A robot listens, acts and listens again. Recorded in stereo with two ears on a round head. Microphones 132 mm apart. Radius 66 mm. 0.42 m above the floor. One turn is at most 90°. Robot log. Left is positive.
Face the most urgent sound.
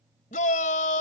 note: The shout: about 55° left or 125° left.
cmd yaw +55
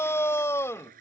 note: So it is at 20° left.
cmd yaw +20
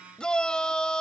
end: Found it: a shout, straight ahead.